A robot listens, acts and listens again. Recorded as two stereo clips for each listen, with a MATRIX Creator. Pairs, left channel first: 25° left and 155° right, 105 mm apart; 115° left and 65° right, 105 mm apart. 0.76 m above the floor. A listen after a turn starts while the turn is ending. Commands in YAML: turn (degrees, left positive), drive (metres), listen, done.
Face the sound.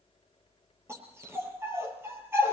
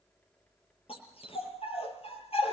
turn: 135
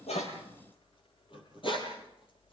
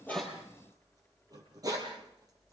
turn: -15
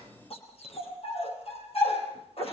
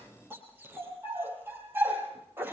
done: "Found it: a dog barking, straight ahead, over 4 m away."